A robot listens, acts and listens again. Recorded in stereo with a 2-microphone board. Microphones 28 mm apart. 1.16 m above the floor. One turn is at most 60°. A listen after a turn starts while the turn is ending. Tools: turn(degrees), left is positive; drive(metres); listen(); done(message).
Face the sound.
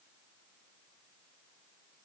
listen()
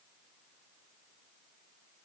listen()
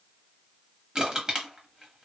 turn(degrees=-30)
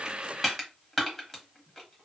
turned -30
done("Found it: crushing, straight ahead.")